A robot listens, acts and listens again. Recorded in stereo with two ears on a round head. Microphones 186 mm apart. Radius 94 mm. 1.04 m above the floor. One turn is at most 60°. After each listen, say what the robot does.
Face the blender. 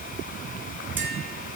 Keep listening.
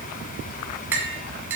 Keep listening.
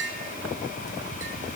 I can't make out a blender, only tapping.